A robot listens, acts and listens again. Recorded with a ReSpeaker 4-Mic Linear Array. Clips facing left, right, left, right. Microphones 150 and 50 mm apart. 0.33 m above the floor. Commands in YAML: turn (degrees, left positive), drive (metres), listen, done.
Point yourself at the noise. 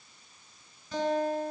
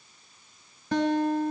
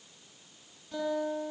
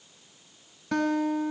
turn: -70
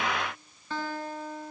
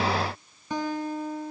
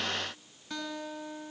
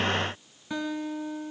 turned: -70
turn: -15
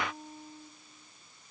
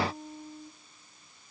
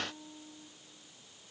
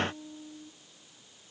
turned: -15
done: "Facing the guitar."